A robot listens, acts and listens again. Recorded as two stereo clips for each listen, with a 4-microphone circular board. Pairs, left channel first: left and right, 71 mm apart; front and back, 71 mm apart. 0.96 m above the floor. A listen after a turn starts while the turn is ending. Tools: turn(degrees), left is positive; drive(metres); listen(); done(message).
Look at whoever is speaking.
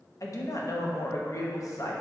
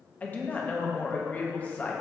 turn(degrees=65)
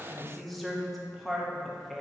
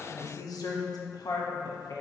done("Facing the woman speaking, 1 to 2 m away.")